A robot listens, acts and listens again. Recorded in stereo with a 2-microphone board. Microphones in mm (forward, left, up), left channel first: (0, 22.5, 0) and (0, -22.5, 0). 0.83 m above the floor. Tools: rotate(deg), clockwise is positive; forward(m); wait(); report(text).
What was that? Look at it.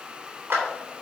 rotate(55)
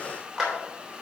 report("Facing the clap.")